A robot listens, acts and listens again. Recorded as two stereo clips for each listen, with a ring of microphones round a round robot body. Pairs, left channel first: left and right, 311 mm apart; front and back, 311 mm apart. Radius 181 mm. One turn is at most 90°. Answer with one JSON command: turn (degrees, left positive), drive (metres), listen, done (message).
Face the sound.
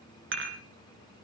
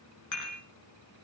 {"turn": -40}
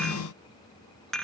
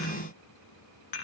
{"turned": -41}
{"done": "Found it: dishes clattering, straight ahead, 2 to 4 m away."}